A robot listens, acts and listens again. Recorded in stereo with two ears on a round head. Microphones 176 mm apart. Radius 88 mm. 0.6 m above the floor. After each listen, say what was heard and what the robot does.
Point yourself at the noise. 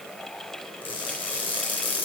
The crushing: about 25° left or 155° left. Turn 25° left.
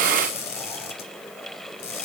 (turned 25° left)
So it is at 125° left. Turn 125° left.
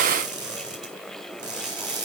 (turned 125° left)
The crushing is now 20° right. Turn 20° right.
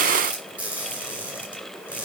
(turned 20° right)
Facing the crushing, 2 to 4 m away.